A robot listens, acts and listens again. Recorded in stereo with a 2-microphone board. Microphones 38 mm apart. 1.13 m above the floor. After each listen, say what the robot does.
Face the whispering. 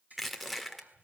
Turn 50° right.
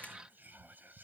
Turn 70° right.
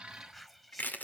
Found it: whispering, straight ahead.